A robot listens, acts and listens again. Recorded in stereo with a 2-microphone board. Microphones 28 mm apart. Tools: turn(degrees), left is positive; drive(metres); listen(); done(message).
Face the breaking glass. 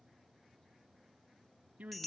listen()
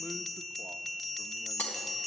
turn(degrees=90)
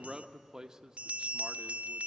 done("Facing where the breaking glass came from. I can't hear it now.")